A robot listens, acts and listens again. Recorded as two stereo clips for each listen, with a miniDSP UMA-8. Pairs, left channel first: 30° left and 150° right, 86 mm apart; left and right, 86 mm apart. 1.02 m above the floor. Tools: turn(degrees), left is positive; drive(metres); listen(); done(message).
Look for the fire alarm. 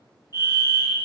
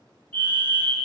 turn(degrees=155)
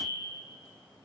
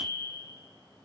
listen()
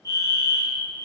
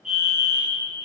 done("Facing the fire alarm, 2 to 4 m away.")